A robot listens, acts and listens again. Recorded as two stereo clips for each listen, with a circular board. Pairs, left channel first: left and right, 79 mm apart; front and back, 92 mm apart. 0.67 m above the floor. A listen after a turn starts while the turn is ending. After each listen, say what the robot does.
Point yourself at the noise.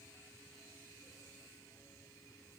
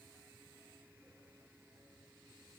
Keep listening.
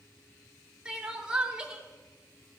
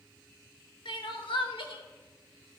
Turn 10° right.
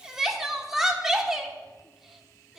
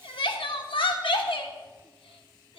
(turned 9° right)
Found it: crying, straight ahead.